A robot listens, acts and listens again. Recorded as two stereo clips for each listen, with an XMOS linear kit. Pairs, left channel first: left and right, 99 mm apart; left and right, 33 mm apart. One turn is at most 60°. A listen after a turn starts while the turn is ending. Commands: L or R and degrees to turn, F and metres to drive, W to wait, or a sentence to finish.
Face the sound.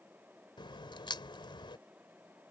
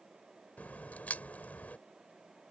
L55
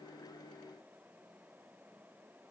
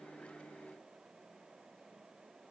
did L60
W
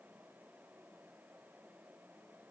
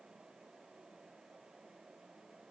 I heard a crack, but can't make it out now. It was about 5° right or 65° left.